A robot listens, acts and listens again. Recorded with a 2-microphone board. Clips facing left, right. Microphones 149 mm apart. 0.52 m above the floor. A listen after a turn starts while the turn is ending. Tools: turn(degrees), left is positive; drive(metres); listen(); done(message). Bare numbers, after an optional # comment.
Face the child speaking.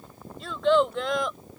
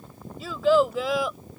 turn(-30)
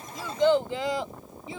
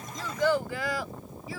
# So it is at 20° left.
turn(20)
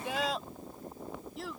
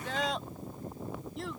done("Facing the child speaking.")